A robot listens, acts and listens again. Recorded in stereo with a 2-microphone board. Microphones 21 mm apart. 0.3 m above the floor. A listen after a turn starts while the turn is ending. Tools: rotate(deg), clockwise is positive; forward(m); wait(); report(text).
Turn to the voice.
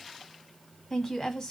rotate(-25)
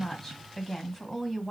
report("Facing the woman speaking, 1 to 2 m away.")